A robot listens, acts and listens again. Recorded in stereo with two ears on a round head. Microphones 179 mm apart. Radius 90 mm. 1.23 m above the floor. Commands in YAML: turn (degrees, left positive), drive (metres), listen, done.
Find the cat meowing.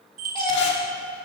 turn: 25
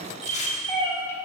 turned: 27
turn: 30
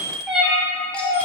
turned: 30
turn: 30
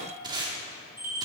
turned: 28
listen: true
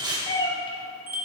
turn: 20
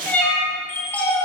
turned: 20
turn: 30
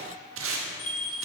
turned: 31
listen: true
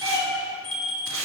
turn: -20
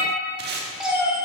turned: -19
done: "Found it: a cat meowing, straight ahead, 1 to 2 m away."